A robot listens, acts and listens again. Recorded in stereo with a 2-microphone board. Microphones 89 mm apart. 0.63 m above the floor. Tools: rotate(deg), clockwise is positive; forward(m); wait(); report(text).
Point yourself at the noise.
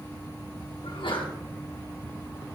rotate(-70)
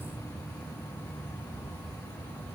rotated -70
wait()
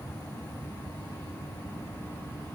report("I heard a sneeze, but can't make it out now. It was about straight ahead or 40° left.")